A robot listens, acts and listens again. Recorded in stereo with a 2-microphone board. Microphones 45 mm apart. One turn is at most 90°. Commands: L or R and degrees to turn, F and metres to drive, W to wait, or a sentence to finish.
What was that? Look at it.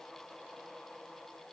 W
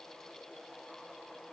W
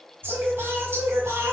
R75
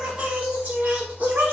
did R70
R40
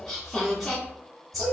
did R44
Found it: singing, straight ahead, 1 to 2 m away.